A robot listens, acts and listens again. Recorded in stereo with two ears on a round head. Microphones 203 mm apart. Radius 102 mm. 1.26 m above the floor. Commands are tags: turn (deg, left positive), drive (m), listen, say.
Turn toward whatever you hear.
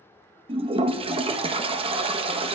<turn deg="-25"/>
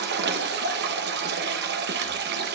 <turn deg="-130"/>
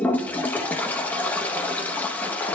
<say>Found it: a toilet flushing, straight ahead.</say>